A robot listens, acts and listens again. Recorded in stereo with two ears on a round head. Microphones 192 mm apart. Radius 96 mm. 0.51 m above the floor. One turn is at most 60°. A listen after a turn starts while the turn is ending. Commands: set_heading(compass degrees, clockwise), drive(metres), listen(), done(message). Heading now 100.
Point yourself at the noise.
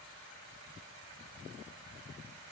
listen()
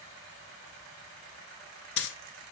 set_heading(40)
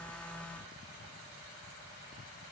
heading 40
listen()
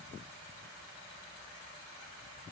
done("I heard a dropped coin, but can't make it out now. It was about 5° left or 55° left.")